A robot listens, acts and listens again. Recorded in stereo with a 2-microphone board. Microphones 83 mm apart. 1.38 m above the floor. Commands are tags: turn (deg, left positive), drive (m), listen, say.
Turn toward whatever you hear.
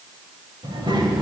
<turn deg="-75"/>
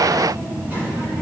<turn deg="-20"/>
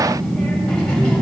<turn deg="15"/>
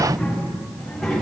<say>Found it: a child speaking, straight ahead.</say>